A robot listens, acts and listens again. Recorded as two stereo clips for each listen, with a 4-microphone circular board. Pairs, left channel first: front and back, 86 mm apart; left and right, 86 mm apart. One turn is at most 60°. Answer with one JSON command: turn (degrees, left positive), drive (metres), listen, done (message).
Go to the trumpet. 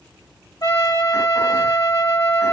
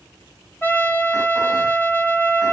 {"turn": 25}
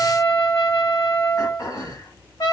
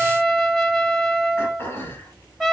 {"drive": 1.0}
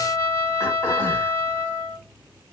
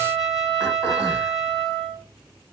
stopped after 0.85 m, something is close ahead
{"done": "I am next to the trumpet."}